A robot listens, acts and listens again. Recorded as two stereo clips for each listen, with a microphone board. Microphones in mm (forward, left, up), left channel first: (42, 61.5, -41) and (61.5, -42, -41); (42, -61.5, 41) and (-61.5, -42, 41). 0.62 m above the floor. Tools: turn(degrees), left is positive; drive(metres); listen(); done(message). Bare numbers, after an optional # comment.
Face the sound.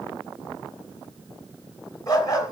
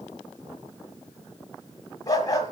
# The dog barking: 45° left.
turn(45)
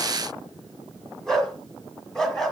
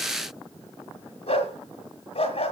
# The dog barking is now 15° left.
turn(15)
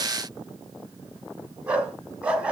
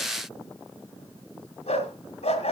done("Facing the dog barking.")